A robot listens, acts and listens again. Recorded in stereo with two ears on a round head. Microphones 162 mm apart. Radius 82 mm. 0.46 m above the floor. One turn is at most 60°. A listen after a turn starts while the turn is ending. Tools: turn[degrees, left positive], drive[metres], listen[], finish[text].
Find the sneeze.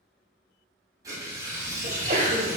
Thought: The sneeze: about 40° right or 140° right.
Action: turn[-40]
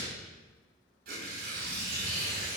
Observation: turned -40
Action: listen[]
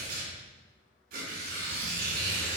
Action: finish[I heard a sneeze, but can't make it out now. It was about straight ahead or 100° right.]